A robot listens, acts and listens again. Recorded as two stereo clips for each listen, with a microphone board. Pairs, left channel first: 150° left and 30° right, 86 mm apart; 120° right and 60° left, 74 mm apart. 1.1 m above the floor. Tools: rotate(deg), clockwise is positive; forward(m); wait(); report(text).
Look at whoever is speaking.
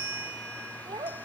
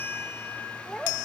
rotate(40)
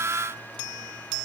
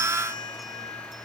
wait()
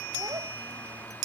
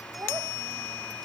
wait()
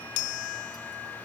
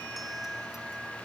report("Facing where the child speaking came from. I can't hear it now.")